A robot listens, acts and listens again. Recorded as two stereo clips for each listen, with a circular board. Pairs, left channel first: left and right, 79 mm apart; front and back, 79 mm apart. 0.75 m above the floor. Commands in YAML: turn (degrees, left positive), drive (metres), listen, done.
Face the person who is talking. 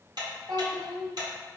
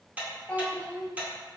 turn: -75
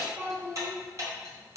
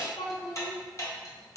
turn: -35
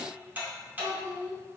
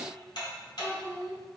turn: -65
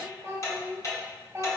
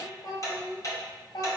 turn: -25
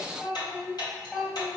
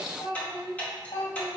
done: "Found it: a child speaking, straight ahead."